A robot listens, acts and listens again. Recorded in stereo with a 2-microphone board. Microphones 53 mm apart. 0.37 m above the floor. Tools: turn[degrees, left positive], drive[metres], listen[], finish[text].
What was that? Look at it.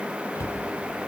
Thought: The cupboard door: about 60° left or 120° left.
Action: turn[60]
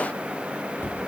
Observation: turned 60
Thought: So it is at 50° left.
Action: turn[50]
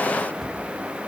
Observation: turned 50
Action: finish[Facing the cupboard door, 1 to 2 m away.]